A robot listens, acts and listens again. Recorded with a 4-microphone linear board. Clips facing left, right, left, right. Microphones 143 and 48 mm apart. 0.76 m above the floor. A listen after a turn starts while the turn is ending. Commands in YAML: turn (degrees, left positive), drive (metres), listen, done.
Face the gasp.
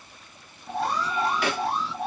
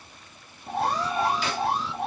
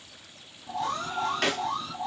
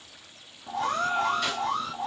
turn: -65
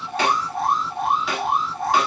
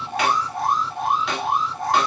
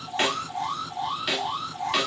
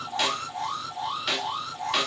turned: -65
listen: true
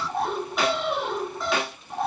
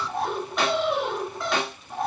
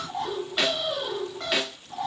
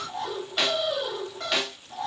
done: "I heard a gasp, but can't make it out now. It was about straight ahead or 50° right."